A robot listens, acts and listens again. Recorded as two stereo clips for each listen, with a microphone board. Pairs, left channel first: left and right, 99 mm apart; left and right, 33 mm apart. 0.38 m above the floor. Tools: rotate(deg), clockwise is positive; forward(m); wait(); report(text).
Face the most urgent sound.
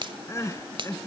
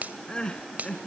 rotate(-30)
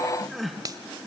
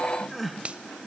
report("Found it: crying, straight ahead.")